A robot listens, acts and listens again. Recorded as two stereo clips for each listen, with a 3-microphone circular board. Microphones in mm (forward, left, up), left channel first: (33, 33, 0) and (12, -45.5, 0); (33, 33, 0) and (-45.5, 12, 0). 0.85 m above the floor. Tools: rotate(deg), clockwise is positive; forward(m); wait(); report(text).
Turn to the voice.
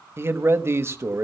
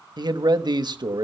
rotate(155)
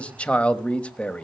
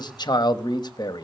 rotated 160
report("Facing the man speaking, 1 to 2 m away.")